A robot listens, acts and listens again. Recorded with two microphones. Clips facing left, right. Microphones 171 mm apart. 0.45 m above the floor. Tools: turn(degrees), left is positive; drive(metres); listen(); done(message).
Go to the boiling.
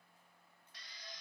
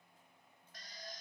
listen()
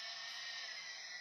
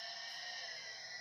listen()
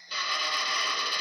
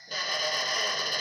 done("I can't make out boiling, only a drill.")